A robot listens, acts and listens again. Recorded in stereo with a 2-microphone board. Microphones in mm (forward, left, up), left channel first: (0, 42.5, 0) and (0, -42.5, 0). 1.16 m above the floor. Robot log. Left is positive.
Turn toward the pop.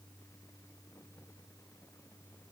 cmd idle
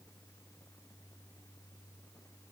cmd idle
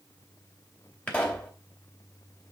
note: The pop: about 20° left or 160° left.
cmd yaw +20
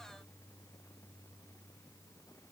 cmd idle
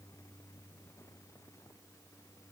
end: I heard a pop, but can't make it out now. It was about straight ahead or 140° left.